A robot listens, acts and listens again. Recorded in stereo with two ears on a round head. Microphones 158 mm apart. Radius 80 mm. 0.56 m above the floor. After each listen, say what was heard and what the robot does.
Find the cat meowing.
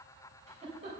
Keep listening.
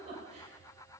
Keep listening.
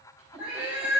Turn 30° right.
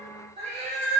So it is at 140° right. Turn 140° right.
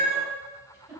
The cat meowing is now 50° right. Turn 50° right.
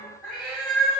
Found it: a cat meowing, straight ahead, over 4 m away.